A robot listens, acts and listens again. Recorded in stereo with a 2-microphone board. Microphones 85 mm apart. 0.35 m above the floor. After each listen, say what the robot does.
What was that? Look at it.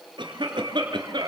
Turn 65° right.
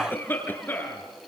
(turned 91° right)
Turn 25° left.
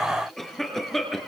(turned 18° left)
Facing the cough.